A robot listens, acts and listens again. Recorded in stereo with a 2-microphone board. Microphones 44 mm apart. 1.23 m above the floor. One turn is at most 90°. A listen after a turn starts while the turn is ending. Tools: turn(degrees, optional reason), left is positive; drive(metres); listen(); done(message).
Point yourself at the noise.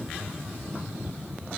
listen()
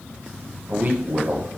turn(degrees=-45, reason="The man speaking: about 45° right or 135° right.")
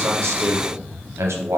turn(degrees=-90, reason="So it is at 90° right.")
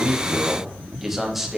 done("Facing the man speaking.")